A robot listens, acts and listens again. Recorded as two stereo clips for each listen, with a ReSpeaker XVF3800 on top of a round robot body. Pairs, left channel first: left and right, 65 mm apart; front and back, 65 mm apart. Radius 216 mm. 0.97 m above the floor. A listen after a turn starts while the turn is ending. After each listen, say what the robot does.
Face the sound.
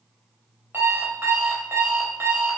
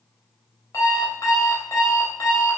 Turn 40° right.
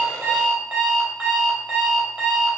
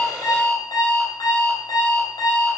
Turn 20° right.
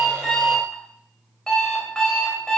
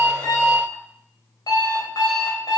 Found it: an alarm clock, straight ahead.